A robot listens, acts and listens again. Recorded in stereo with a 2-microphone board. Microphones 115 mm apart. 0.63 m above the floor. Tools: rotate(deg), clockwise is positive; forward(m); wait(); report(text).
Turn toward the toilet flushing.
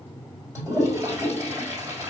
rotate(25)
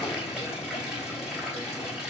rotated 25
report("Found it: a toilet flushing, straight ahead, 2 to 4 m away.")